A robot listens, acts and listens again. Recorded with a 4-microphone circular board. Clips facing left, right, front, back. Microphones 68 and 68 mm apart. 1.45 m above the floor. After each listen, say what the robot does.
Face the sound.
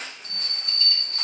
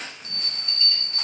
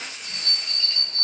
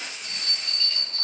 Turn 75° left.
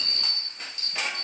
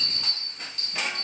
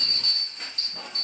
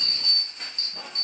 Found it: a bell, straight ahead.